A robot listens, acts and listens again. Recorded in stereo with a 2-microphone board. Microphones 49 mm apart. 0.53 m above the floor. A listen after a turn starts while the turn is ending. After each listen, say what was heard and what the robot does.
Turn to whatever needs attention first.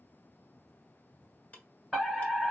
Turn 30° left.
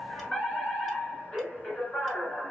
So it is at 150° left. Turn 150° left.
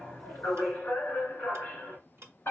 The fire alarm is now 60° left. Turn 60° left.
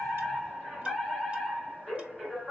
Found it: a fire alarm, straight ahead.